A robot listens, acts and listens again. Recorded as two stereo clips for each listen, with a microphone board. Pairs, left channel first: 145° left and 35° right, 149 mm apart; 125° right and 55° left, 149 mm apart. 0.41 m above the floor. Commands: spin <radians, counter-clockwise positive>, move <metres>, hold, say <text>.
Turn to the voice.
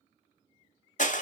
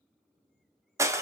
hold
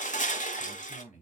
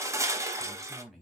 spin 2.53
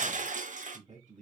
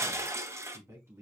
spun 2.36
spin -0.26
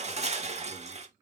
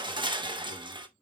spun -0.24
hold
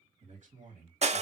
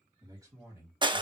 spin -0.17
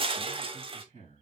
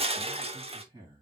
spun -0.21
say Found it: a man speaking, straight ahead, 2 to 4 m away.